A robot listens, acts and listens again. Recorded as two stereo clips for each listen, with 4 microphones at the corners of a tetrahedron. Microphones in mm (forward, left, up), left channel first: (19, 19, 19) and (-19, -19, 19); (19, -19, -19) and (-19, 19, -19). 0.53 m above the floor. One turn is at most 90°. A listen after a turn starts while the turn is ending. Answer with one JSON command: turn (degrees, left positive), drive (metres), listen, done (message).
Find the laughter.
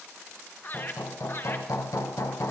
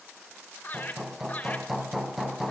{"done": "Found it: laughter, straight ahead, 2 to 4 m away."}